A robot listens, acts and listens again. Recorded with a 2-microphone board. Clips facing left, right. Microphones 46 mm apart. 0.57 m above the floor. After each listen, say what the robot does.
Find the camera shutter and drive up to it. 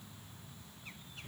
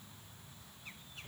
Keep listening.
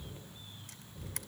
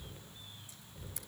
Turn 65° left.
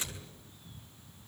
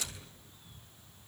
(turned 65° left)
Turn 30° left.
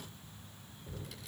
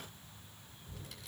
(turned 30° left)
Keep listening.
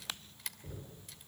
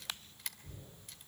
Drive 1.0 m forward.
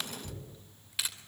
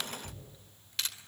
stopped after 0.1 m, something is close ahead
Turn 10° left.
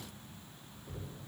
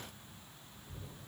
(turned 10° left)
Keep listening.
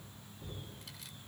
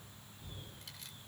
Keep listening.
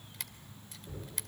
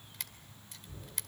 Something is in my way. I am facing the camera shutter but have not reached it.